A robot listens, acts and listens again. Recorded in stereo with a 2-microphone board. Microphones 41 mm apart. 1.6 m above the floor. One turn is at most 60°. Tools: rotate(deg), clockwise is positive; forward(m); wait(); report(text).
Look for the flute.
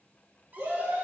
wait()
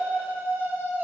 wait()
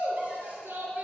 report("I can't make out a flute, only a shout.")